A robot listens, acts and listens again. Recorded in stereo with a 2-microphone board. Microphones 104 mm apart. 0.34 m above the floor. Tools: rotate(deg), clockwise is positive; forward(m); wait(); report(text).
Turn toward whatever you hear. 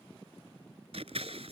rotate(90)
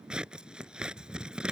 rotate(10)
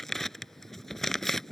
report("Facing the scissors.")